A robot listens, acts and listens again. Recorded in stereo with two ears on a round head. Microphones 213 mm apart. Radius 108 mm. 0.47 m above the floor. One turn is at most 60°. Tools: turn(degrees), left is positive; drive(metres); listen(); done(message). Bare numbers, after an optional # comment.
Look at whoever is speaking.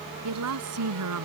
turn(-60)
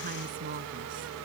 # Nothing new. It was at 30° right.
turn(-30)
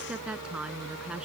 done("Found it: a woman speaking, straight ahead.")